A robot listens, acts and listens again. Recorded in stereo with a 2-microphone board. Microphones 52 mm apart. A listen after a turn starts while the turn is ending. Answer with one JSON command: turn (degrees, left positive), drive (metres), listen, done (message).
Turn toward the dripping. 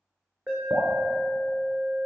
{"turn": -65}
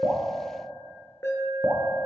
{"turn": -45}
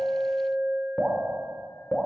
{"turn": -10}
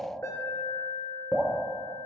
{"done": "Found it: dripping, straight ahead."}